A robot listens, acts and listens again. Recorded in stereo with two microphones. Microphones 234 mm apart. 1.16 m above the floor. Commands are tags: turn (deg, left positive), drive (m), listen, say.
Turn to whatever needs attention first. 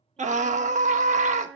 <turn deg="-30"/>
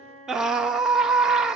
<say>Facing the scream.</say>